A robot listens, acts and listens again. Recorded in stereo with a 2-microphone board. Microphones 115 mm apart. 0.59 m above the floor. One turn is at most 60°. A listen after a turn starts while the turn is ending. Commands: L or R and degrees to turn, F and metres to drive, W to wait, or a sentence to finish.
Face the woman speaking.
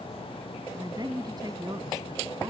R40
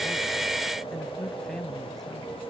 Facing the woman speaking.